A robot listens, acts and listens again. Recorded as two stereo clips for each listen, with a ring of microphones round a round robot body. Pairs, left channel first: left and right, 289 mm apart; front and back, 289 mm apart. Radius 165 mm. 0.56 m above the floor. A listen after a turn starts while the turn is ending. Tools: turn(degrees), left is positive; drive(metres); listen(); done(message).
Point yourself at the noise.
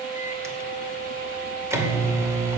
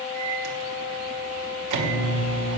turn(degrees=-170)
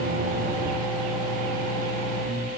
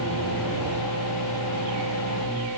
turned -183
turn(degrees=15)
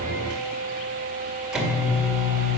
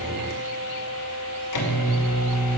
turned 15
done("Facing the microwave, 2 to 4 m away.")